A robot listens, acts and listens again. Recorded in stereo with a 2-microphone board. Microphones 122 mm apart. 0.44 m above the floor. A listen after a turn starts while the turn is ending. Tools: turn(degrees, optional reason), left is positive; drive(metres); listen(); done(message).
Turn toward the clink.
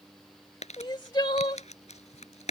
listen()
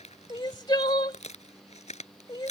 listen()
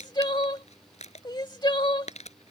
done("I can't make out a clink to turn to.")